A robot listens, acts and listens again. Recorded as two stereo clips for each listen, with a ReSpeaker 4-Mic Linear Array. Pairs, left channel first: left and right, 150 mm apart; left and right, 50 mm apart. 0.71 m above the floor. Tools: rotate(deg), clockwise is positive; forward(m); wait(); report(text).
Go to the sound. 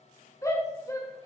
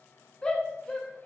rotate(-20)
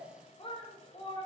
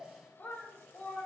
rotate(-140)
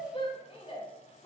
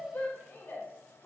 rotate(-40)
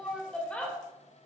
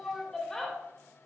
rotate(-10)
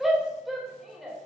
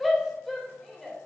forward(1.0)
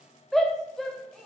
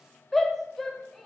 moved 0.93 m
forward(1.0)
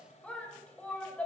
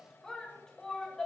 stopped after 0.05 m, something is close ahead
rotate(-10)
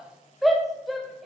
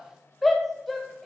report("I am next to the shout.")